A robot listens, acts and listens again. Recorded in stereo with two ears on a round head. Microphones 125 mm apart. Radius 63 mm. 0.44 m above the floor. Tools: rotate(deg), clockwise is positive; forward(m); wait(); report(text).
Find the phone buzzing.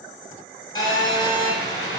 rotate(-25)
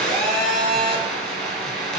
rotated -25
report("Facing the phone buzzing.")